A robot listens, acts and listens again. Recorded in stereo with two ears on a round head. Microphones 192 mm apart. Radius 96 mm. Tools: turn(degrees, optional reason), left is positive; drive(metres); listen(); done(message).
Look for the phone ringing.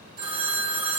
turn(degrees=-20, reason="The phone ringing: about 20° right or 160° right.")
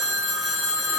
done("Found it: a phone ringing, straight ahead.")